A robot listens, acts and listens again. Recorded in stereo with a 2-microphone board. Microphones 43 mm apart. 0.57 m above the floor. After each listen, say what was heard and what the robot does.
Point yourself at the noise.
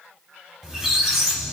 Turn 30° right.
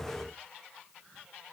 So it is at 20° left. Turn 20° left.
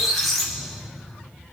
Facing the squeak.